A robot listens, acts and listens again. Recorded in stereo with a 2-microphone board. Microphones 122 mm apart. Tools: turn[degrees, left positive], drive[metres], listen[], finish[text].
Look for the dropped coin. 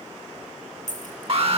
Action: turn[90]
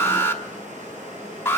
Action: finish[I heard a dropped coin from this way, but can't make it out now.]